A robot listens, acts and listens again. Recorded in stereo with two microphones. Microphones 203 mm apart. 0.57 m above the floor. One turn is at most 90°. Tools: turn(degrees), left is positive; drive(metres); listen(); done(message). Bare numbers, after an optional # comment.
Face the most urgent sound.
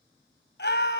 # The scream: about 60° left or 120° left.
turn(60)
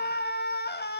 # So it is at 60° left.
turn(60)
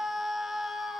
done("Found it: a scream, straight ahead, 2 to 4 m away.")